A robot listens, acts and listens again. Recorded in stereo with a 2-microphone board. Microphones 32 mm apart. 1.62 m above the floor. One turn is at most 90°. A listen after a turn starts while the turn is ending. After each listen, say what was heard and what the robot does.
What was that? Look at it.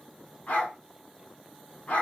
The dog barking: about 60° left or 120° left. Turn 60° left.
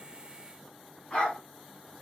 So it is at 40° left. Turn 40° left.
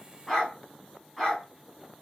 Facing the dog barking, 2 to 4 m away.